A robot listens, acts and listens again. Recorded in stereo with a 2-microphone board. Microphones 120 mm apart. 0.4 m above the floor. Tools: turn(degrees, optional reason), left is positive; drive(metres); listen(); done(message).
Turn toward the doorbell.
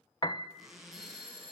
turn(degrees=-45, reason="The doorbell: about 45° right or 135° right.")
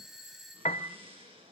done("Facing the doorbell, over 4 m away.")